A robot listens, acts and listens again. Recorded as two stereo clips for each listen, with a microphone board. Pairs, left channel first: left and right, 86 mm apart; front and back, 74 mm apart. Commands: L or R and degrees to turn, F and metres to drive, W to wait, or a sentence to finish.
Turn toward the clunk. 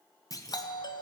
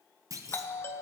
L140
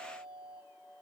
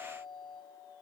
I heard a clunk from this way, but can't make it out now.